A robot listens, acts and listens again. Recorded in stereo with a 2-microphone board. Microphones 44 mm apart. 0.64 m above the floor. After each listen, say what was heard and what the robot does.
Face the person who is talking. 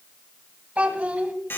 The child speaking: about 35° right or 145° right. Turn 35° right.
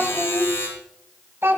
So it is at 110° right. Turn 110° right.
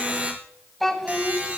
Found it: a child speaking, straight ahead.